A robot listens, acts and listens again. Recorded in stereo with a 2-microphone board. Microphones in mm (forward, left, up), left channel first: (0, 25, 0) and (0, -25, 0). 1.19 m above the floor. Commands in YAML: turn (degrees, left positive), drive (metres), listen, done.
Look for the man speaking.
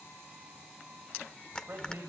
turn: -40
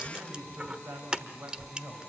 turn: -105
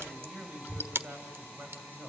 turn: -35
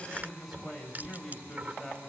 done: "Found it: a man speaking, straight ahead."